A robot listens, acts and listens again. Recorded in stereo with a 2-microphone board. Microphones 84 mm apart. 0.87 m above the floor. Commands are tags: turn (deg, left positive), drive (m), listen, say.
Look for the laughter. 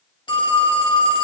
<listen/>
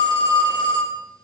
<listen/>
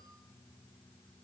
<say>I can't make out laughter to turn to.</say>